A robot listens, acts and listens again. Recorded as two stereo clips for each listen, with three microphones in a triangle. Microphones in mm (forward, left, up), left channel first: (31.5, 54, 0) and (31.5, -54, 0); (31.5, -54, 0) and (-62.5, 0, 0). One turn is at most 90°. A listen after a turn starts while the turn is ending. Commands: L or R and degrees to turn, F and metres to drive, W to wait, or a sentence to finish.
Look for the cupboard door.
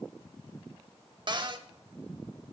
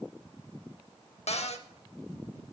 R45
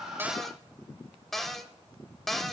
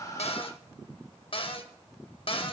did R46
Facing the cupboard door.